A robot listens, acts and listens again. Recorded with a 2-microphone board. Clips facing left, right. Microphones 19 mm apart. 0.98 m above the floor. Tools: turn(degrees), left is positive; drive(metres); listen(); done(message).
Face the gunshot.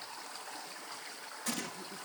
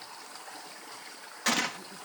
turn(degrees=-60)
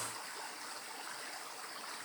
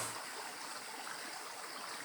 listen()
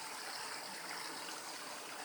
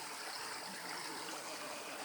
done("I heard a gunshot, but can't make it out now. It was about straight ahead or 60° right.")